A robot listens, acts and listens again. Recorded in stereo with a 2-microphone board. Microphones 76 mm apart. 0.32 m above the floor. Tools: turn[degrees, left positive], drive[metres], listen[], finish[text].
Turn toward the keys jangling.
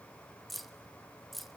Action: turn[30]
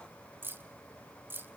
Thought: So it is at 35° right.
Action: turn[-35]
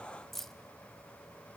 Action: finish[Facing the keys jangling, 1 to 2 m away.]